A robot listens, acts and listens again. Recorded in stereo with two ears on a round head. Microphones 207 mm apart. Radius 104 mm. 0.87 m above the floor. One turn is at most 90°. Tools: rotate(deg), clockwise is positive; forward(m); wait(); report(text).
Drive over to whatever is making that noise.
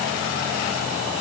wait()
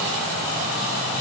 wait()
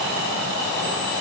report("I can't make out anything to turn to.")